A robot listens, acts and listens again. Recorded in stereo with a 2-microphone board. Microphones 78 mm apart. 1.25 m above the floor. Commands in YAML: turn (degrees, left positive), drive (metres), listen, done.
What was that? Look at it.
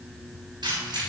turn: -65
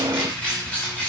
turn: 20
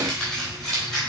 turn: 10
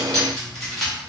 done: "Facing the keys jangling."